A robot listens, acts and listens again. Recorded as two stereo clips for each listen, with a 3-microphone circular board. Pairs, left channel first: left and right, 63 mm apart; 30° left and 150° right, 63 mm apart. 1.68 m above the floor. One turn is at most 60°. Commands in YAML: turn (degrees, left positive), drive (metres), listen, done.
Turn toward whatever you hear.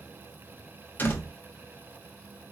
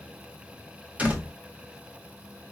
turn: 60
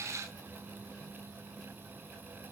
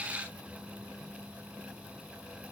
turn: 60
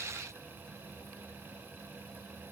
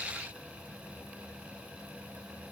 turn: 25
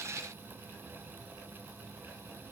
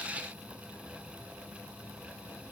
done: "I heard a door slam from this way, but can't make it out now."